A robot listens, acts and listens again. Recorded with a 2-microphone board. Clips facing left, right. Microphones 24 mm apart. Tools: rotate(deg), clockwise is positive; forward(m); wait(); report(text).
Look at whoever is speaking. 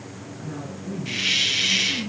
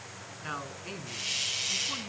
rotate(55)
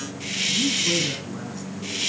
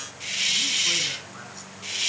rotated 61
wait()
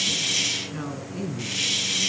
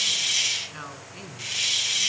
rotate(10)
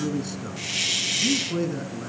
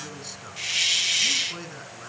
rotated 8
report("Facing the man speaking, 2 to 4 m away.")